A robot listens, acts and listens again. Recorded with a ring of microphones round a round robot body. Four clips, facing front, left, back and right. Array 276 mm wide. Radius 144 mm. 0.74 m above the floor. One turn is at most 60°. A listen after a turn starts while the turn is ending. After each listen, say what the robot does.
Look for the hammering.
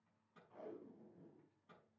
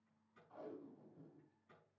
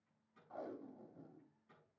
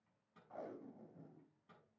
Keep listening.
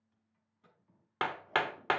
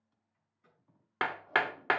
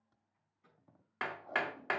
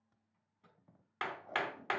Turn 50° left.
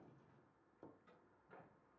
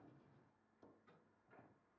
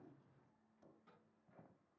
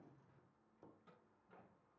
Keep listening.
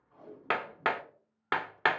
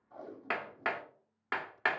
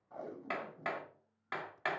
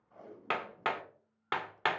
Turn 10° right.
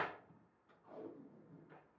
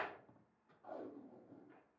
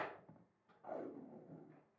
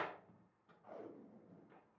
Keep listening.
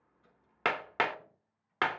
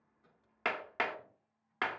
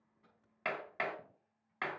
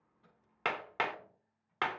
Found it: hammering, straight ahead.